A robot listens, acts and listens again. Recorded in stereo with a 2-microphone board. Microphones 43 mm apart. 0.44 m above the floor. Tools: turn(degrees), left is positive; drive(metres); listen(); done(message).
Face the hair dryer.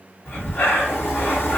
listen()
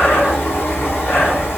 listen()
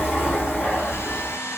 turn(degrees=90)
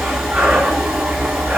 listen()
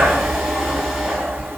listen()
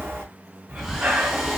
done("I heard a hair dryer from this way, but can't make it out now.")